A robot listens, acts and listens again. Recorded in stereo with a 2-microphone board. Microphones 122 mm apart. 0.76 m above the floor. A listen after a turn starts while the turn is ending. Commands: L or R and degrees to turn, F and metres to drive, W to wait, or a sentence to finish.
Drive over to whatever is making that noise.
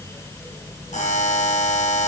L90
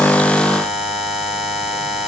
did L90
F1.0
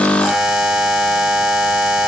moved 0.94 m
F1.0
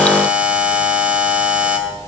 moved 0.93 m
R10
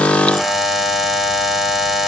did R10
F1.0
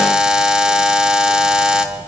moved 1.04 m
F1.0
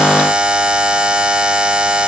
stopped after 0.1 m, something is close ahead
R10
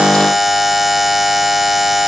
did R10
Arrived at the buzzer, straight ahead.